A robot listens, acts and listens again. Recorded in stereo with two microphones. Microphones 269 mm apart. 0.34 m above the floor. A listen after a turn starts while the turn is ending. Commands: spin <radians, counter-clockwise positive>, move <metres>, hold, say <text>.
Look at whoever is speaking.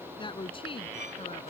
spin 0.35
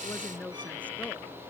spin 0.52
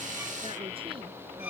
hold
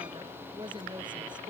spin -0.26
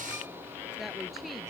hold
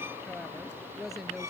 say Facing the woman speaking.